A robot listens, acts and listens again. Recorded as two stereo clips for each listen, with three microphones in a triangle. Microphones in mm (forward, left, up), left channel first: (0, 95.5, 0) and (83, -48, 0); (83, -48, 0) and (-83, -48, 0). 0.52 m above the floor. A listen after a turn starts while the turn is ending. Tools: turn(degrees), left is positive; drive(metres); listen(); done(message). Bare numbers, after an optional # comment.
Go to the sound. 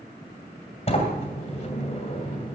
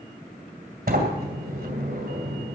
# The sliding door: 165° left.
turn(165)
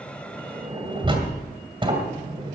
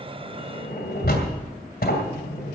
drive(1.0)
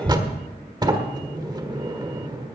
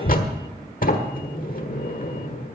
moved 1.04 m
drive(1.0)
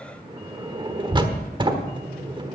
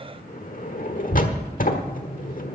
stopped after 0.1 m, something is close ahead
done("I am next to the sliding door.")